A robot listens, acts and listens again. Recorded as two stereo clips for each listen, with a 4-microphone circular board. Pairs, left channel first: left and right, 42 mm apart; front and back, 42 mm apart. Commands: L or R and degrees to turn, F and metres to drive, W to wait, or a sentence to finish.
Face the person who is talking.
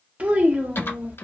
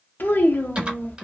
R35
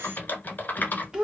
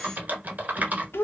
R20
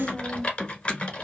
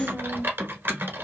Facing the child speaking.